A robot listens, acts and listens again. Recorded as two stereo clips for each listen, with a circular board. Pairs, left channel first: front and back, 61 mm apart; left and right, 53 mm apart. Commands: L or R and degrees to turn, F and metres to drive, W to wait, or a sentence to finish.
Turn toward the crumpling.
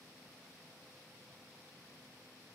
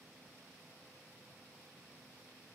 W
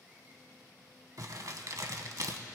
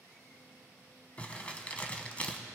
L155
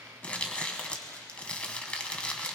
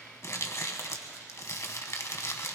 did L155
L70
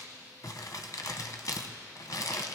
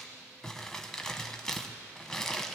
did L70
L15
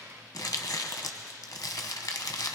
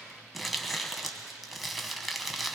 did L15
Facing the crumpling.